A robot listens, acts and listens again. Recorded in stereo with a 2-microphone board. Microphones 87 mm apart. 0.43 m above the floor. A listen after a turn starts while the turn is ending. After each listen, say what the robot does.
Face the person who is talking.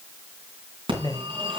Turn 50° left.
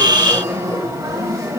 Keep listening.
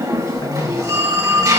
Turn 65° left.
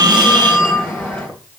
Keep listening.
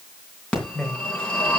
Turn 10° left.
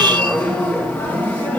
Keep listening.
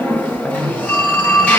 Facing the man speaking, 1 to 2 m away.